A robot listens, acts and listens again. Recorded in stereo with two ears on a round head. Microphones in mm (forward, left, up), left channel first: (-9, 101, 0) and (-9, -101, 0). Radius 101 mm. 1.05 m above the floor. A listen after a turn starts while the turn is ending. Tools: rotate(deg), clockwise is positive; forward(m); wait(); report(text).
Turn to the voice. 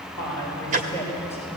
rotate(-30)
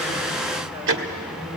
rotate(25)
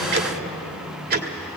wait()
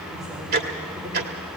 wait()
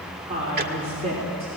rotate(30)
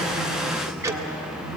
report("Facing the woman speaking, 2 to 4 m away.")